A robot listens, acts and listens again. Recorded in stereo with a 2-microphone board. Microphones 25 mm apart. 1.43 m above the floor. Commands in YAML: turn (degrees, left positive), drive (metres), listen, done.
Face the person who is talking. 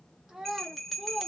turn: -20
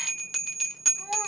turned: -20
listen: true
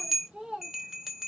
turn: -135
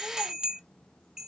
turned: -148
turn: 15
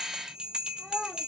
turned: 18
done: "Found it: a child speaking, straight ahead."